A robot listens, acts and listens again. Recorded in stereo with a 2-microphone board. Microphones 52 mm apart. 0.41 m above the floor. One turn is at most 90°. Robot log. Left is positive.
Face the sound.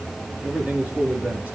note: The man speaking: about 25° right or 155° right.
cmd yaw -25
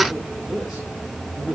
cmd yaw -30
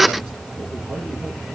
cmd idle
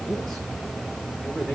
note: So it is at 10° left.
cmd yaw +10
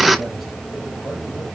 cmd idle
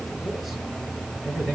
end: Found it: a man speaking, straight ahead, over 4 m away.